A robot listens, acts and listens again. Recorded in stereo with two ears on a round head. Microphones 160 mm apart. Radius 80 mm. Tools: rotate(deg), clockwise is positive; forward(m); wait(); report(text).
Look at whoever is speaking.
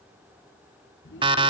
rotate(-70)
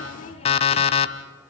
rotate(-35)
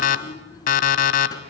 rotate(-20)
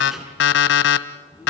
report("Facing the child speaking.")